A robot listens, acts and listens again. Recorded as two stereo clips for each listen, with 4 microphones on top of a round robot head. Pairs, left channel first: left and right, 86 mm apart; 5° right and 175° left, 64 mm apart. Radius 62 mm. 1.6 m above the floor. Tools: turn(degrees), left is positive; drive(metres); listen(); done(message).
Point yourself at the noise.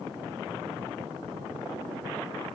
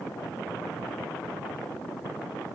listen()
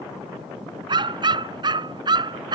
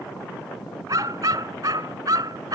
turn(degrees=-130)
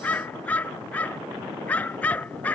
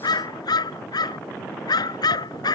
turn(degrees=10)
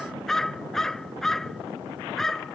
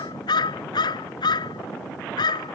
done("Found it: a dog barking, straight ahead.")